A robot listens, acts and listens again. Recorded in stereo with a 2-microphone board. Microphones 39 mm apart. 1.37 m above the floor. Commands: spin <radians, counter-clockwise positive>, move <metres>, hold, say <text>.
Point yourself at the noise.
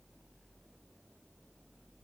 hold
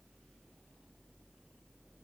hold
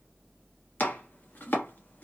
spin 0.87
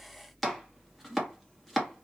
say Found it: chopping, straight ahead, under 1 m away.